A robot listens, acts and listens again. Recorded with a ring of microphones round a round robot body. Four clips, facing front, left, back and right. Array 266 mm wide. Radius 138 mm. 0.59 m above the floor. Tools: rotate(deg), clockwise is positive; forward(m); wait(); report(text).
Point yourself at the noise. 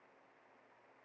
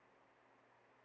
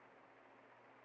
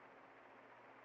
wait()
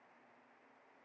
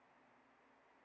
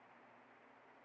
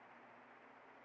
wait()
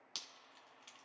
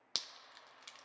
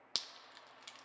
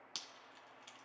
rotate(-135)
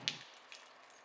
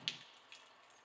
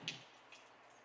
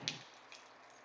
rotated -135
report("Found it: dripping, straight ahead.")